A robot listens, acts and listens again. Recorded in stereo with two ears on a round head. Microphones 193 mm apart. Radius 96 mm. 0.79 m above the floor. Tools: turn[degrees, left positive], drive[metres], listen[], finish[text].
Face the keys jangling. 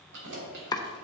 Thought: The keys jangling: about 55° right or 125° right.
Action: turn[-55]
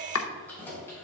Thought: So it is at 10° left.
Action: turn[10]
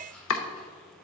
Action: listen[]
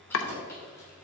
Thought: The keys jangling is now 15° left.
Action: turn[15]
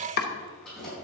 Action: finish[Found it: keys jangling, straight ahead, over 4 m away.]